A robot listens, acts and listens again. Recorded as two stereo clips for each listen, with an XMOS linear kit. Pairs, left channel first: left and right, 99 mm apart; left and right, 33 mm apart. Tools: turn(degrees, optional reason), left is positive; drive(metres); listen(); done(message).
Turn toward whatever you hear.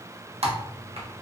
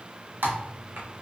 turn(degrees=-90)
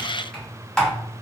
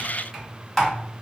done("Found it: typing on a keyboard, straight ahead.")